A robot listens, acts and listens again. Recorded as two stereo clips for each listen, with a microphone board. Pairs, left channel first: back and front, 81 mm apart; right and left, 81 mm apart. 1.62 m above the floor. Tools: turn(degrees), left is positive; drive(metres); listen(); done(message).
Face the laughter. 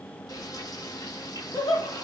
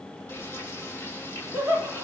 turn(degrees=160)
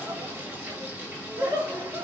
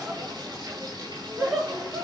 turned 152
turn(degrees=10)
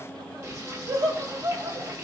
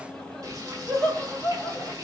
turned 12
done("Found it: laughter, straight ahead, over 4 m away.")